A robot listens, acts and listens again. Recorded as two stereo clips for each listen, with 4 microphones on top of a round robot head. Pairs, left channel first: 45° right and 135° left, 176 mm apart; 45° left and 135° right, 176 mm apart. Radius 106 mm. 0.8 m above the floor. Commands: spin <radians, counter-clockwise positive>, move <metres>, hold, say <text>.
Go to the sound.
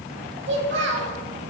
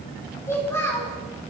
spin 2.09
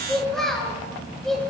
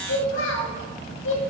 spin 0.79
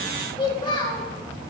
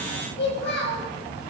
spin 0.35
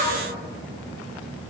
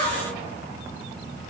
spin 0.17
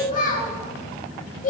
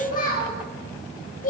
move 1.0
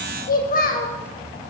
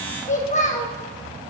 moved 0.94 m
move 1.0
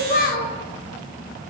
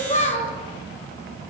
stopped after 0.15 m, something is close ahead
spin -0.17
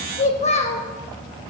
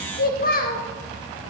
spin 0.17
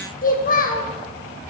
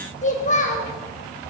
say Something is in my way. I am facing the child speaking but have not reached it.